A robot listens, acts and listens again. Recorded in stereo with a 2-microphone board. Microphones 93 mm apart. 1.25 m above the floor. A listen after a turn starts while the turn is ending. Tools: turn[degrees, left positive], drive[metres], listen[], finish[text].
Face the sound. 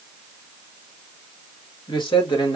Thought: The man speaking: about 55° left or 125° left.
Action: turn[55]
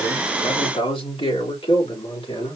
Thought: So it is at 75° left.
Action: turn[75]
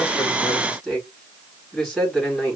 Action: finish[Found it: a man speaking, straight ahead.]